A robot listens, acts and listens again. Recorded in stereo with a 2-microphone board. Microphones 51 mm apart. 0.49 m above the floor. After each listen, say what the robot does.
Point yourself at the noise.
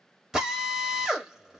Turn 30° right.
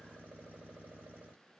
Keep listening.
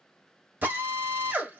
Turn 140° right.
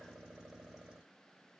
Keep listening.
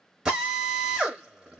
Turn 15° right.
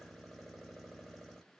Keep listening.
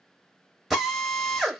Facing the drill.